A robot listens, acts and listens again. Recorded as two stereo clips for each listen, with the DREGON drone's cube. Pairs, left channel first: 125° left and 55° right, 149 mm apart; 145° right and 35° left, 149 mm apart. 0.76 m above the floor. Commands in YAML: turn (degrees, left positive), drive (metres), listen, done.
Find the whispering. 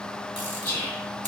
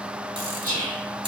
turn: 50
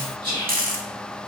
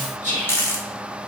done: "Found it: whispering, straight ahead."